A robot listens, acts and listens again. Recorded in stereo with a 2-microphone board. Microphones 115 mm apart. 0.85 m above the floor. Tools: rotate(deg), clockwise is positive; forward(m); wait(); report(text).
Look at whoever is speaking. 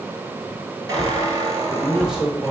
rotate(30)
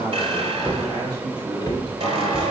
rotate(140)
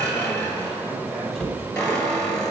wait()
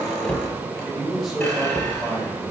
report("Found it: a man speaking, straight ahead.")